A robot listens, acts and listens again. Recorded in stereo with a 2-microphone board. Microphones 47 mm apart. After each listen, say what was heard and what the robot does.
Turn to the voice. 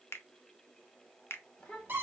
The child speaking: about 20° left or 160° left. Turn 20° left.
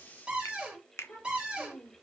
So it is at 125° left. Turn 125° left.
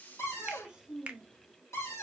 The child speaking is now 10° right. Turn 10° right.
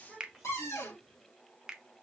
Found it: a child speaking, straight ahead.